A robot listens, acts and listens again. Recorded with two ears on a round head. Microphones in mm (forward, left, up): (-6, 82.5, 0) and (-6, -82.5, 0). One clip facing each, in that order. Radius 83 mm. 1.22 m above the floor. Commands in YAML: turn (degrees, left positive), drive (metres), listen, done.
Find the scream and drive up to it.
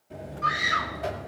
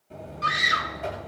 turn: -50
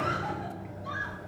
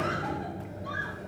listen: true
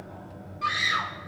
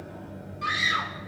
drive: 1.0
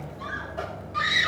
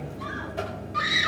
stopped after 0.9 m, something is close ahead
done: "I am next to the scream."